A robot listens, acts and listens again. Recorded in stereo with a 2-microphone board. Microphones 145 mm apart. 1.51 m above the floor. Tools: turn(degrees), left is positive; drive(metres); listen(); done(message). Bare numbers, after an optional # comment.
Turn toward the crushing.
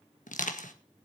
# The crushing: about 65° left or 115° left.
turn(65)
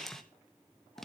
done("Found it: crushing, straight ahead.")